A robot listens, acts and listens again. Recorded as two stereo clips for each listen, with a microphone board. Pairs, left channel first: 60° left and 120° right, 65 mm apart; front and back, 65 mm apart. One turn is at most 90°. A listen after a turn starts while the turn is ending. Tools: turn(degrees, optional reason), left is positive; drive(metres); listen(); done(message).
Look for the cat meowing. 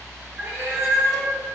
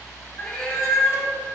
turn(degrees=-80, reason="The cat meowing: 80° right.")
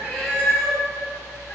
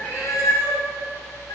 done("Found it: a cat meowing, straight ahead.")